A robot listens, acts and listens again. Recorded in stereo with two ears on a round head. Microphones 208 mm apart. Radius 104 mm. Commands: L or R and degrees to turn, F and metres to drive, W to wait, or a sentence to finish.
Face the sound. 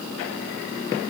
W
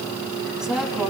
L30
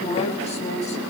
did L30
L150
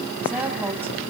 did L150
R10
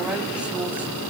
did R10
Facing the woman speaking, 2 to 4 m away.